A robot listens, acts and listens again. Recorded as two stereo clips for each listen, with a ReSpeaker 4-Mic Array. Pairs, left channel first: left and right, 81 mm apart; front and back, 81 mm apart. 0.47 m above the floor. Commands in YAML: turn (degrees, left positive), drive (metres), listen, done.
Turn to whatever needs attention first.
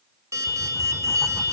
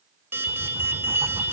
turn: -125
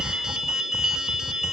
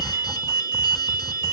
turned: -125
turn: -10
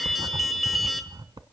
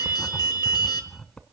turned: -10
done: "Found it: an alarm, straight ahead, 1 to 2 m away."